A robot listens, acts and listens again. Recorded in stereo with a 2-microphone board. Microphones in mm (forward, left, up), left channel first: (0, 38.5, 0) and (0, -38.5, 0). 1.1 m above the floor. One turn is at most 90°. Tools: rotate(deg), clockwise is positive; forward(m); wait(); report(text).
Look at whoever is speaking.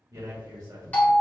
rotate(50)
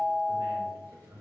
rotate(70)
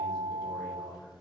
rotate(-10)
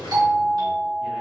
wait()
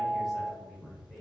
report("Facing the man speaking, 1 to 2 m away.")